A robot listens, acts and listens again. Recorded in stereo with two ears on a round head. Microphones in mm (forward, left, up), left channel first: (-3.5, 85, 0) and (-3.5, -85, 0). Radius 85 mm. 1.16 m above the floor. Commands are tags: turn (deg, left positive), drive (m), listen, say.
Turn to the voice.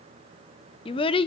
<turn deg="30"/>
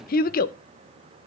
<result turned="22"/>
<turn deg="130"/>
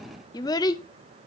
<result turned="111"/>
<turn deg="20"/>
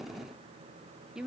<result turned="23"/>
<say>Found it: a child speaking, straight ahead.</say>